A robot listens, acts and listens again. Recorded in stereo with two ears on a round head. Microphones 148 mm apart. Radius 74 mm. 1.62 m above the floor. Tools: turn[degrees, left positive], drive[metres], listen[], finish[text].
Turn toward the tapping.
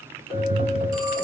Thought: The tapping: about 60° right or 120° right.
Action: turn[-60]
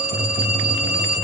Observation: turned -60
Thought: So it is at 50° right.
Action: turn[-50]
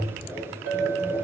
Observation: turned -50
Action: finish[Facing the tapping.]